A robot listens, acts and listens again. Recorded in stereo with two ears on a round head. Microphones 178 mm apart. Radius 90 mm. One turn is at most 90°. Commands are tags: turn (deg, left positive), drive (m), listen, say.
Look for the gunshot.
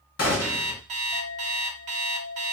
<turn deg="90"/>
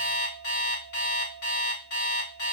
<say>I heard a gunshot from this way, but can't make it out now.</say>